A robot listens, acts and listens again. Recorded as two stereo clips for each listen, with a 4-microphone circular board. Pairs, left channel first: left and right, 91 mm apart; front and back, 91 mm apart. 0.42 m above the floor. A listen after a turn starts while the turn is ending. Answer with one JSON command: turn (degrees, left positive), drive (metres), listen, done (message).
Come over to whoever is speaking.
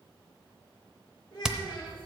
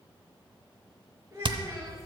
{"turn": 120}
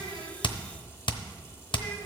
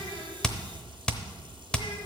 {"listen": true}
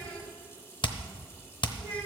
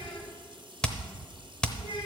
{"turn": 10}
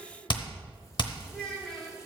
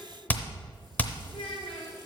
{"drive": 1.0}
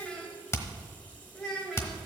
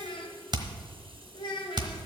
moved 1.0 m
{"drive": 1.0}
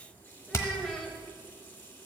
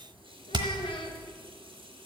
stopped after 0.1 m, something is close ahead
{"done": "I am next to the child speaking."}